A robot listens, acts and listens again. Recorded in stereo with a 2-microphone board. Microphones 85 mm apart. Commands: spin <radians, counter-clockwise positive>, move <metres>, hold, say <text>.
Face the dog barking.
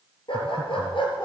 spin 1.57
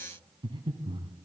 hold
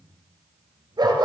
spin -0.96
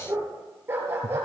spin -0.52
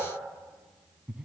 hold
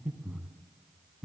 hold
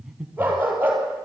spin -0.35
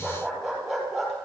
say Found it: a dog barking, straight ahead.